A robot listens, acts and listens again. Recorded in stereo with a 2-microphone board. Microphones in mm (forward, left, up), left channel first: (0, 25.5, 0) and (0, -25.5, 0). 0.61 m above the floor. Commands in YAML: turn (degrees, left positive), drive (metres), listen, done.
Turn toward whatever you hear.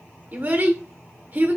turn: -40
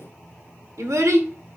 turn: -105
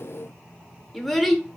done: "Facing the child speaking, under 1 m away."